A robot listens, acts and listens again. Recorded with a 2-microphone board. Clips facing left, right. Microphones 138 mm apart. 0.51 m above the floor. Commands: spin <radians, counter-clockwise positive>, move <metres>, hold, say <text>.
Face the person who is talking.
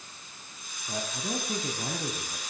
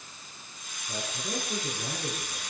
spin 1.13
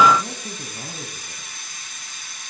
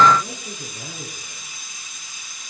spin 0.87
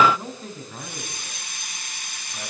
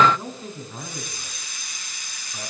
say Facing the man speaking, over 4 m away.